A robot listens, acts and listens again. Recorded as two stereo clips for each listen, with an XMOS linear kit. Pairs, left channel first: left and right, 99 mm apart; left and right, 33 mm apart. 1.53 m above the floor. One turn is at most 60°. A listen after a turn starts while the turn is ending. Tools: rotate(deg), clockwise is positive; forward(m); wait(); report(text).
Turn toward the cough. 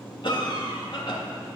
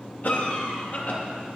rotate(-55)
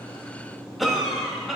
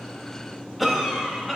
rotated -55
report("Found it: a cough, straight ahead, 2 to 4 m away.")